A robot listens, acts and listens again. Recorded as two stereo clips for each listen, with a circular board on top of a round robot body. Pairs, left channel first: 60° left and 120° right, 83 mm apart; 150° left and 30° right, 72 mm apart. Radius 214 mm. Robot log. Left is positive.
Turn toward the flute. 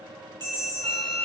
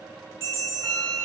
note: The flute: 135° right.
cmd yaw -135
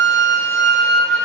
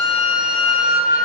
end: Facing the flute.